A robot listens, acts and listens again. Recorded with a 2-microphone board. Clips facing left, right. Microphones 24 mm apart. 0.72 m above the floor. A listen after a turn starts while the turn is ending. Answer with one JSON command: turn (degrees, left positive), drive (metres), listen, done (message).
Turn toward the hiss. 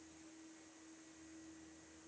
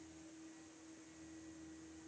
{"listen": true}
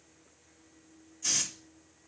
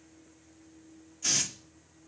{"turn": -25}
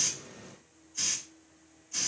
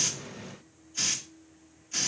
{"turn": -130}
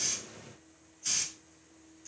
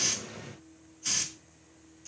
{"turn": -20}
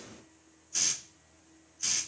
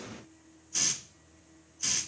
{"done": "Facing the hiss."}